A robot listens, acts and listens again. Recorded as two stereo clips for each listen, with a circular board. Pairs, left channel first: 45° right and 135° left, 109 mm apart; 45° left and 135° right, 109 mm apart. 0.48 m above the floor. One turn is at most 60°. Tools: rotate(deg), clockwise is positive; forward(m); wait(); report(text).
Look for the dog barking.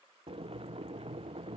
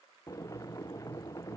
wait()
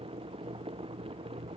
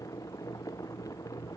wait()
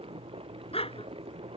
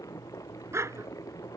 rotate(60)
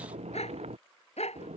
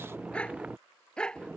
rotate(35)
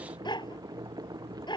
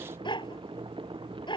report("Facing the dog barking.")